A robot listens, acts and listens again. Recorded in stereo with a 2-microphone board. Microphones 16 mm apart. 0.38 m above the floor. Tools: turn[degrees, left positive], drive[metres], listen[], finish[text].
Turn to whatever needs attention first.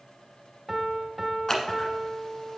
Action: listen[]
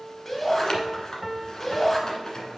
Thought: The shout: about 20° left or 160° left.
Action: turn[20]
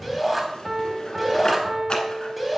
Action: finish[Facing the shout, 2 to 4 m away.]